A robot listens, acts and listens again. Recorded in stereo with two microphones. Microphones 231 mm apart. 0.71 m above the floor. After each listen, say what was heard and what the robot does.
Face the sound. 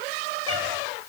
Keep listening.
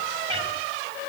The cat meowing: about 25° right or 155° right. Turn 25° right.
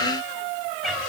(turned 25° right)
Facing the cat meowing, 2 to 4 m away.